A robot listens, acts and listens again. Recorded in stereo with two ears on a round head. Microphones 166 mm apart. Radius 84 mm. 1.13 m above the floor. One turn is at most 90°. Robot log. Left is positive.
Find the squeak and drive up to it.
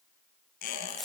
note: The squeak: about 60° left or 120° left.
cmd yaw +60
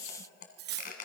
note: So it is at 55° left.
cmd yaw +55
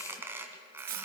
note: The squeak is now 15° right.
cmd yaw -15
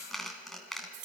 cmd fwd 1.0
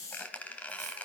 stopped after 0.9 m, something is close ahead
note: The squeak is now 10° left.
cmd yaw +10
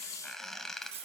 end: I am next to the squeak.